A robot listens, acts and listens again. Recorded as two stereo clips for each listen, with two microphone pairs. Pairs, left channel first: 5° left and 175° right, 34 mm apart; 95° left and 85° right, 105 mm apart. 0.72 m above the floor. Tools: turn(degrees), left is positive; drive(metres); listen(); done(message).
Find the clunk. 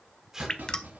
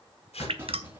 turn(degrees=-150)
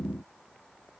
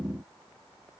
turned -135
turn(degrees=-15)
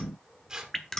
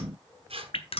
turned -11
done("I heard a clunk from this way, but can't make it out now.")